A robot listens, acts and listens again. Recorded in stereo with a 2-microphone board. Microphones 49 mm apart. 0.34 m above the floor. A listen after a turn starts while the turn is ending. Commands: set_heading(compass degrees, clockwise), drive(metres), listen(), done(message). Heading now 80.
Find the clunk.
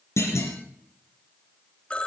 set_heading(350)
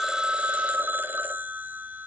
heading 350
done("I heard a clunk from this way, but can't make it out now.")